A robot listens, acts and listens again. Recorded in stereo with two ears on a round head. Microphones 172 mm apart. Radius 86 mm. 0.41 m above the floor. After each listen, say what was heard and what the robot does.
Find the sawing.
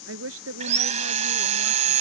The sawing: about 40° right or 140° right. Turn 40° right.
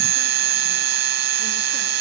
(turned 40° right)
So it is at 100° right. Turn 100° right.
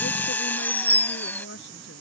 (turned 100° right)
The sawing is now 10° left. Turn 10° left.
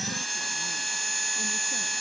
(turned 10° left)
Facing the sawing.